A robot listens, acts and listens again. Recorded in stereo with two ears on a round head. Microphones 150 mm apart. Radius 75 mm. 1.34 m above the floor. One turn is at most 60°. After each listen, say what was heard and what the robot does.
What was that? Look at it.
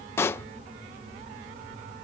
The pop: about 15° left or 165° left. Turn 15° left.
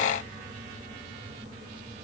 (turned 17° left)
Keep listening.
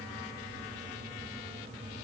I heard a pop, but can't make it out now. It was about straight ahead or 150° left.